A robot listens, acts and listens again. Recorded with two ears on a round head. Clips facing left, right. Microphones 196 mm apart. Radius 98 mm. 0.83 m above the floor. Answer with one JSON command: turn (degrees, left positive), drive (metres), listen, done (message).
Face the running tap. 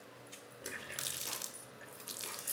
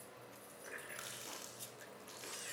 {"turn": 55}
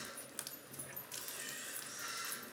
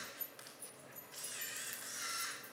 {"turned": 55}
{"turn": 70}
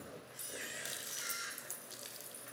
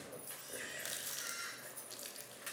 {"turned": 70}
{"done": "Facing the running tap, 1 to 2 m away."}